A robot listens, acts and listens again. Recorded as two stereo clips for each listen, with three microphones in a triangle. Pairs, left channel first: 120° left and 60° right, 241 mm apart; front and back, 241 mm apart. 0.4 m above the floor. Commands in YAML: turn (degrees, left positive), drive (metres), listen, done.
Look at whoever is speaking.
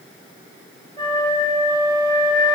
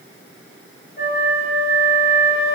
listen: true
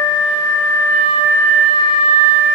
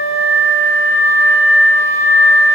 listen: true
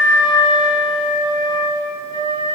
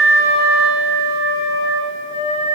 done: "I can't make out anyone speaking, only a flute."